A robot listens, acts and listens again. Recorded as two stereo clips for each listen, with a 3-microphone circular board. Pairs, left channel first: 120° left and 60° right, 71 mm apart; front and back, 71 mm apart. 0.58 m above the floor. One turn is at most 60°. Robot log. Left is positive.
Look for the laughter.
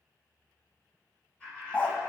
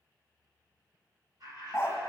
note: The laughter: 165° right.
cmd yaw -60
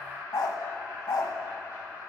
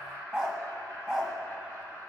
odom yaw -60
note: The laughter is now 125° right.
cmd yaw -60
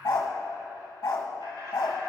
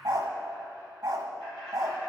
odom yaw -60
note: The laughter is now 75° right.
cmd yaw -60
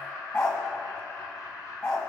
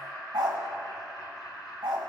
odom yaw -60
note: The laughter is now 30° right.
cmd yaw -30
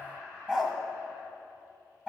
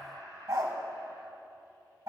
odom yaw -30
note: The laughter is now 10° right.
cmd yaw -10
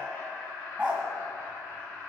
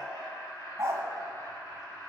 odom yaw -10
end: Found it: laughter, straight ahead, over 4 m away.